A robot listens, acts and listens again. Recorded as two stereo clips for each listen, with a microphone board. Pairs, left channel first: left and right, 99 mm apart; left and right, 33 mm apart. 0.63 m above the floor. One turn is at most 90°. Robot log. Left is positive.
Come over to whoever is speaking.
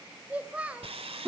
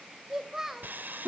cmd yaw -30
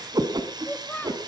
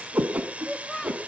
note: So it is at 20° left.
cmd yaw +20
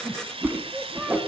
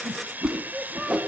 cmd fwd 1.0
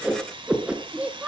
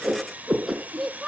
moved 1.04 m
note: The child speaking is now 15° right.
cmd yaw -15
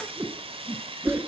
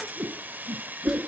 cmd idle
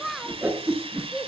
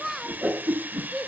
cmd fwd 1.0
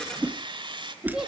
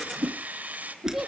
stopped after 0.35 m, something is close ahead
end: I am next to the child speaking.